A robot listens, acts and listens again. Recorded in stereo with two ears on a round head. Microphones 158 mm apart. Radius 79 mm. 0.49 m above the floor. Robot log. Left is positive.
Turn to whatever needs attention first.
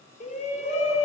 note: The shout: about 40° left or 140° left.
cmd yaw +40
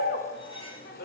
note: So it is at 90° left.
cmd yaw +90
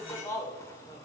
note: The shout is now 20° left.
cmd yaw +20
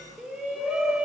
end: Facing the shout.